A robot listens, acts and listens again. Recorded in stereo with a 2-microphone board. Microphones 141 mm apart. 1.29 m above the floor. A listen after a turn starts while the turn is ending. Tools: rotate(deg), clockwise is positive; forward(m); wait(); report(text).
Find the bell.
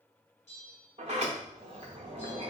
rotate(-50)
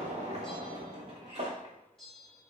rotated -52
report("Found it: a bell, straight ahead.")